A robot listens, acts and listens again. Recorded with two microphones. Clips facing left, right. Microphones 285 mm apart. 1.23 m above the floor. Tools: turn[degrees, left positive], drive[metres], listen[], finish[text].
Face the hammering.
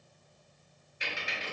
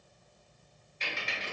Action: listen[]
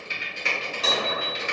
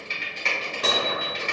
Thought: The hammering: about 60° right or 120° right.
Action: turn[-60]
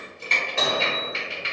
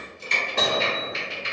Thought: So it is at 50° right.
Action: turn[-50]
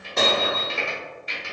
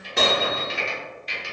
Action: finish[Found it: hammering, straight ahead.]